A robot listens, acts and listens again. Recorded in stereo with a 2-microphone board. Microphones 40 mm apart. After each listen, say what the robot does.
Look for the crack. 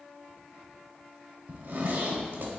Keep listening.
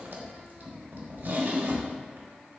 Keep listening.
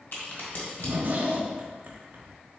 Turn 55° left.
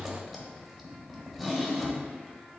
Keep listening.
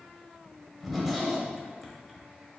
I heard a crack, but can't make it out now. It was about straight ahead or 70° left.